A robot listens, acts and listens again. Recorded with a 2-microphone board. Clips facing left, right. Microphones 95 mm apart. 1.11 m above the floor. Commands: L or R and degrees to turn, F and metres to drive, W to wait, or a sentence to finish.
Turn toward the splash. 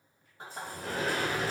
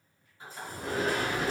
L65
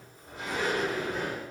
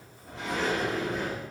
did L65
W
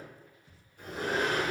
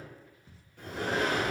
I heard a splash, but can't make it out now. It was about straight ahead or 50° left.